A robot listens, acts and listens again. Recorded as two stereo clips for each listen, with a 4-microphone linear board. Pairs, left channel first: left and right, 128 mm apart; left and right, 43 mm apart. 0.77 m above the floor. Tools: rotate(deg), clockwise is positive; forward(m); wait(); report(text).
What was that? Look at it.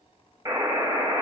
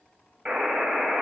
rotate(20)
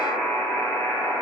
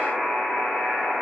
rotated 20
report("Found it: a buzzer, straight ahead, 1 to 2 m away.")